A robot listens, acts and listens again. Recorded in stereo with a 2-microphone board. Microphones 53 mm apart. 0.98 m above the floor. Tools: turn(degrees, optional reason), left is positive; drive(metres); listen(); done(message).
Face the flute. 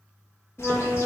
turn(degrees=30)
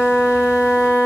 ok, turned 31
turn(degrees=140, reason="So it is at 140° left.")
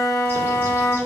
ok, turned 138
done("Facing the flute, 1 to 2 m away.")